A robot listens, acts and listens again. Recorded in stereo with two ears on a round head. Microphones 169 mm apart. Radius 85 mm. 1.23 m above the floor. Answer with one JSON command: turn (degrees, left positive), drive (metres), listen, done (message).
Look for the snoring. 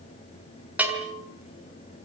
{"listen": true}
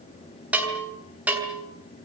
{"listen": true}
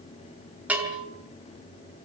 {"done": "I can't make out snoring to turn to."}